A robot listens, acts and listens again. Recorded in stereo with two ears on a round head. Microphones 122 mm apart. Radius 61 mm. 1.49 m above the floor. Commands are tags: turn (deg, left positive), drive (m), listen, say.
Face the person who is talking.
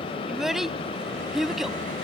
<turn deg="-30"/>
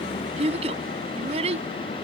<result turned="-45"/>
<turn deg="-130"/>
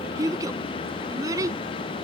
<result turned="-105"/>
<turn deg="-25"/>
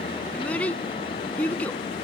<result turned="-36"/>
<turn deg="10"/>
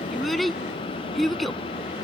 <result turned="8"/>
<say>Facing the child speaking.</say>